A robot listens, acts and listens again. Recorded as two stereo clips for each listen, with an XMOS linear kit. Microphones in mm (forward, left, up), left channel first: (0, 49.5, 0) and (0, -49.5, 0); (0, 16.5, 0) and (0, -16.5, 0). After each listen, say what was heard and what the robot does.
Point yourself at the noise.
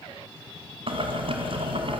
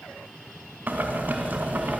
The boiling: about 65° right or 115° right. Turn 65° right.
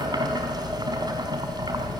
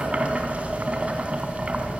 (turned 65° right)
So it is at 45° right. Turn 45° right.
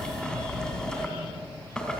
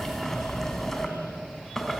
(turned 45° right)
The boiling is now 10° left. Turn 10° left.
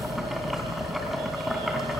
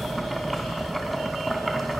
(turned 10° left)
Found it: boiling, straight ahead, 2 to 4 m away.